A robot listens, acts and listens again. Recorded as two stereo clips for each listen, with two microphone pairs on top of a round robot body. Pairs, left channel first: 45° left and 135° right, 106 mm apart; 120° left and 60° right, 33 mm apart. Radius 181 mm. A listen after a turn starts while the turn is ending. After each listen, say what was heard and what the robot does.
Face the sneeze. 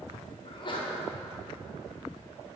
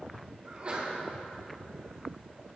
Found it: a sneeze, straight ahead, 2 to 4 m away.